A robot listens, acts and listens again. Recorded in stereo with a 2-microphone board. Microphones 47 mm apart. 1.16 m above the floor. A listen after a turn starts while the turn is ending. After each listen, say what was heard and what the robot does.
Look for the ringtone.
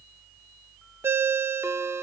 The ringtone: about 65° right or 115° right. Turn 65° right.
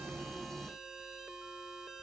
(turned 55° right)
Keep listening.
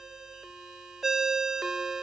So it is at 10° right. Turn 10° right.
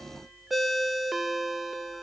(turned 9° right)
Facing the ringtone, under 1 m away.